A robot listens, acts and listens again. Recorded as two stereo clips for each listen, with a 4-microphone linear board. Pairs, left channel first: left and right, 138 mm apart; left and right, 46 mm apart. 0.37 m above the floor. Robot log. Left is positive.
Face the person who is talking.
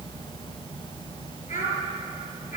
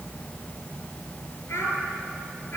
cmd yaw +90
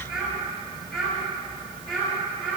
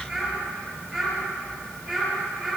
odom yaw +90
end: Facing the child speaking.